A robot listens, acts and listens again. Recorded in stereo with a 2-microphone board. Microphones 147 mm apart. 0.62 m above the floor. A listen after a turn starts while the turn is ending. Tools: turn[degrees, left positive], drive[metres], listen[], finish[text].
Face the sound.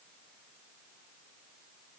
Action: listen[]
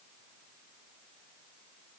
Action: listen[]
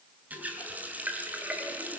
Action: turn[-30]
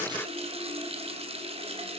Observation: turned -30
Thought: So it is at 140° right.
Action: turn[-140]
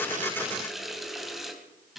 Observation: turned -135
Action: finish[Facing the running tap, 2 to 4 m away.]